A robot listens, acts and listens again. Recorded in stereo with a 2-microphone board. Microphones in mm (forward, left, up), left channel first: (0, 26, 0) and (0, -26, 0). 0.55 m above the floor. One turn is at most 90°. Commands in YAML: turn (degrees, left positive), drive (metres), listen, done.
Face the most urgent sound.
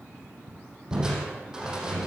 listen: true
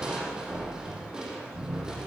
listen: true
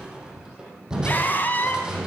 turn: 35
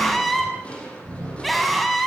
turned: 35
done: "Found it: a scream, straight ahead."